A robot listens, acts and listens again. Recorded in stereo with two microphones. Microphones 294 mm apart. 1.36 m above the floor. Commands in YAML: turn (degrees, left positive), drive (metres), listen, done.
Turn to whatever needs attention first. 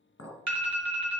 turn: -70
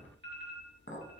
turn: -35
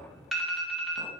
done: "Found it: an alarm, straight ahead."